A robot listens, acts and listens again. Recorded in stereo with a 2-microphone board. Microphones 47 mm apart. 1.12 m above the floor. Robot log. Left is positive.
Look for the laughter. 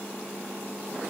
cmd idle
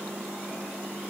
cmd idle
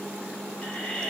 note: The laughter: about 25° left or 155° left.
cmd yaw +25
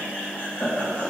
note: So it is at 140° left.
cmd yaw +140
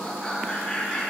note: The laughter is now 10° left.
cmd yaw +10
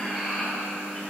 end: Facing the laughter, 2 to 4 m away.